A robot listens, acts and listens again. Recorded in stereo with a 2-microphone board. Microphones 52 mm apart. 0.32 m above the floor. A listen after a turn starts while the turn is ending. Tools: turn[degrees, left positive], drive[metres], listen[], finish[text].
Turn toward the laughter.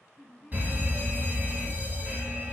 Action: turn[30]
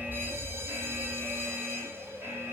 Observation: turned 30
Action: listen[]
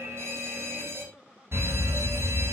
Thought: So it is at 20° right.
Action: turn[-20]
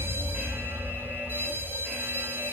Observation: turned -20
Action: listen[]
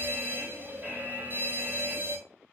Action: listen[]
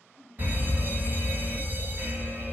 Action: finish[Found it: laughter, straight ahead, 1 to 2 m away.]